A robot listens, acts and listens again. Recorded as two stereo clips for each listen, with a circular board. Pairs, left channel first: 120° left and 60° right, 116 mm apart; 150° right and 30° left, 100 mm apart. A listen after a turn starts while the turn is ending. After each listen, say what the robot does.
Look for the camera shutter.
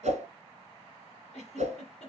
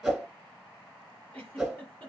Keep listening.
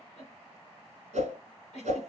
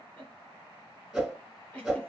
Keep listening.
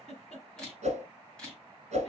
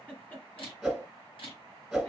Turn 155° right.
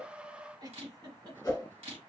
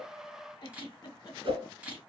Turn 45° right.
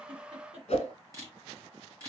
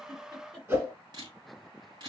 Found it: a camera shutter, straight ahead.